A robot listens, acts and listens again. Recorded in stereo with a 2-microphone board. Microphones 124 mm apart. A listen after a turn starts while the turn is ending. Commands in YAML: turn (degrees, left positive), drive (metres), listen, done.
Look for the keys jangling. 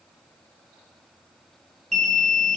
listen: true
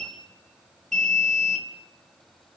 listen: true
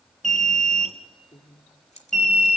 turn: 60
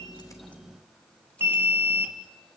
listen: true
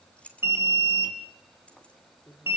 turn: 10
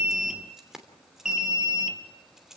done: "Facing the keys jangling, 2 to 4 m away."